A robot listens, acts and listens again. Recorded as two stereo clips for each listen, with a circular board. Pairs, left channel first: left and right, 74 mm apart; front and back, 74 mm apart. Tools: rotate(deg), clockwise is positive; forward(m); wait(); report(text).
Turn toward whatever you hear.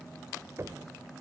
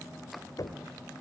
rotate(40)
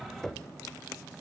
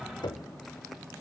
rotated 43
report("Found it: knocking, straight ahead.")